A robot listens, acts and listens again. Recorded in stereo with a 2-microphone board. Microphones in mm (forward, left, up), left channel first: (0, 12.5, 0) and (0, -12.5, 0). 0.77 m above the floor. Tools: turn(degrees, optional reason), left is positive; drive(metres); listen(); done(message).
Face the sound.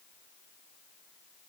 listen()
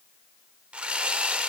turn(degrees=-60, reason="The sawing: about 60° right or 120° right.")
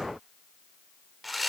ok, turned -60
done("Found it: sawing, straight ahead.")